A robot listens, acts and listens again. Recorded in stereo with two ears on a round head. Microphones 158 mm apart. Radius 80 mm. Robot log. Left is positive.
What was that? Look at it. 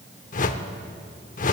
note: The whoosh: about 50° left or 130° left.
cmd yaw +50
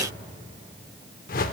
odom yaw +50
note: So it is at 65° left.
cmd yaw +65
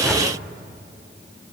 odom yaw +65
end: Found it: a whoosh, straight ahead, under 1 m away.